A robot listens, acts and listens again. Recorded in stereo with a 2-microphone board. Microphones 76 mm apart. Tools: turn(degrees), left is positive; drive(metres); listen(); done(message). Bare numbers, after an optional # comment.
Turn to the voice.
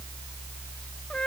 listen()
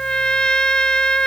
listen()
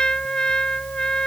done("I can't make out anyone speaking, only a trumpet.")